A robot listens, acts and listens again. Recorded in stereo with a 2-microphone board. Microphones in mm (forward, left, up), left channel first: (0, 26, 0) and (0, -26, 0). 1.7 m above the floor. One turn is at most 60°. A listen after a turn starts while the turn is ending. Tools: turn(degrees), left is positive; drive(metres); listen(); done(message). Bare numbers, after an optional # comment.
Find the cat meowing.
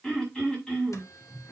listen()
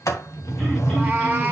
# The cat meowing: about 25° right or 155° right.
turn(-25)
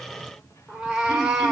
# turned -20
turn(-30)
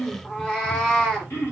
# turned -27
# So it is at 15° left.
turn(15)
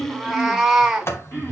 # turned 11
done("Facing the cat meowing.")